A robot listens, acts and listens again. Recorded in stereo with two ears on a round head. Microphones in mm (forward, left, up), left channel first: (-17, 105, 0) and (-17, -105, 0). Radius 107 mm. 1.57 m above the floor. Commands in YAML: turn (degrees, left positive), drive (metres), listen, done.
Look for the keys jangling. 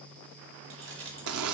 turn: -55
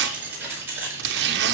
turn: -10
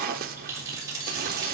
turn: -15
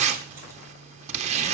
listen: true
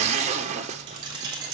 turn: -20
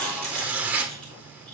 done: "Facing the keys jangling."